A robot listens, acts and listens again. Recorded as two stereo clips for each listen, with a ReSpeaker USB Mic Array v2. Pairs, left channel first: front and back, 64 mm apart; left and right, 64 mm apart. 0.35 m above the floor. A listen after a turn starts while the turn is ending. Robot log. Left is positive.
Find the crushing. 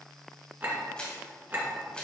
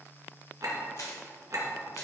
note: The crushing: 70° left.
cmd yaw +70
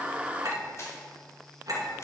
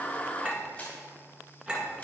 cmd idle
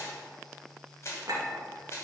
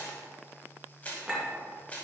note: The crushing is now 25° left.
cmd yaw +25
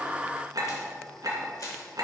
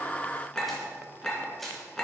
end: Facing the crushing.